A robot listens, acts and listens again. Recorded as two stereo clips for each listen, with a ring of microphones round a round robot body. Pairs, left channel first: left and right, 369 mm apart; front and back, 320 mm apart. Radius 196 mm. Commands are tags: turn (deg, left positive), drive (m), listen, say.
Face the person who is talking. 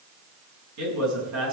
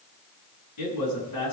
<turn deg="-45"/>
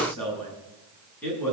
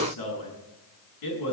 <say>Facing the man speaking, over 4 m away.</say>